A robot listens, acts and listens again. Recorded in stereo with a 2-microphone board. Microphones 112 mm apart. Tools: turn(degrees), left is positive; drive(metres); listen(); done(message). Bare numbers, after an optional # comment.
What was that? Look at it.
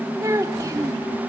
# The child speaking: about 30° right or 150° right.
turn(-30)
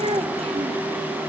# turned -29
# So it is at 120° right.
turn(-120)
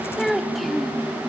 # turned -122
done("Facing the child speaking.")